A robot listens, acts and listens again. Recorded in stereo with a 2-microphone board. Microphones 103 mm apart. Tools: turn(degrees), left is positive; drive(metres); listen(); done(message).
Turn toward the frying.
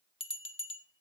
listen()
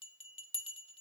listen()
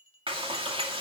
turn(degrees=-55)
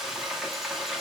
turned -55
done("Found it: frying, straight ahead, 2 to 4 m away.")